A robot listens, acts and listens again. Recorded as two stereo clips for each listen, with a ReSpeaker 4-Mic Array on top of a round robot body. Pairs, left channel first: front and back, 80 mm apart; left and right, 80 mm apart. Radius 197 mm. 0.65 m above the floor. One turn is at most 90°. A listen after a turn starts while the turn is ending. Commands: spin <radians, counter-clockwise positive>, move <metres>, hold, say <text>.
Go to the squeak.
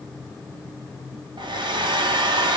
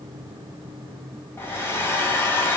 hold
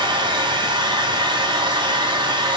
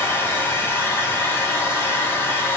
hold
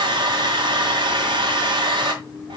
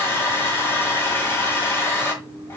say I can't make out a squeak, only a hair dryer.